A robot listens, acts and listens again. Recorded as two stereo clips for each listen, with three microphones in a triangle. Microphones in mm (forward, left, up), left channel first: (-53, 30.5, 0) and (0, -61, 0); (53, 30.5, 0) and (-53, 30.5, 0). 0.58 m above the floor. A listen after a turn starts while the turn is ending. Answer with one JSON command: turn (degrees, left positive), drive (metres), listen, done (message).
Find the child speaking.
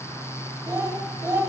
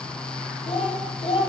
{"done": "Facing the child speaking, 1 to 2 m away."}